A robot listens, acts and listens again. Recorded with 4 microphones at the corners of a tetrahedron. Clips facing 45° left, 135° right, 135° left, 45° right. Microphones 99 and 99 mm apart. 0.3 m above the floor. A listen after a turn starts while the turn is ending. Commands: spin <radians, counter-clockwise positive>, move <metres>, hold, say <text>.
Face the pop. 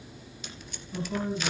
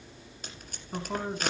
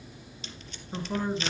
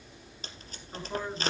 hold
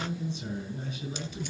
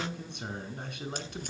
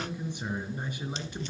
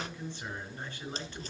hold
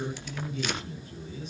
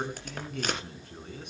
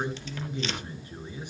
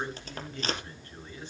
say I can't make out a pop, only tape being pulled and a man speaking.